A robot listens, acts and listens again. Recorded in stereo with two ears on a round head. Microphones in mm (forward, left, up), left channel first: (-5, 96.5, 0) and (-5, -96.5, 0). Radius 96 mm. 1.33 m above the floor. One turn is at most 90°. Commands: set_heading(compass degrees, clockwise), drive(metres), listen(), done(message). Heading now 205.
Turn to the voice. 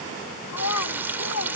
set_heading(115)
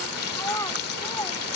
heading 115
set_heading(100)
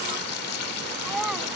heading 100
done("Facing the child speaking.")